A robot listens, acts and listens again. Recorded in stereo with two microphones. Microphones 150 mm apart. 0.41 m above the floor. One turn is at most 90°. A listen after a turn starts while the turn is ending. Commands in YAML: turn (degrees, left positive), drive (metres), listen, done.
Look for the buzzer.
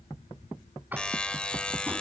turn: 30
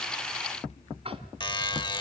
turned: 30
turn: 90
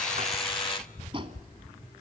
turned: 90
turn: 55
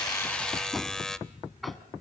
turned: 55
done: "Facing the buzzer, under 1 m away."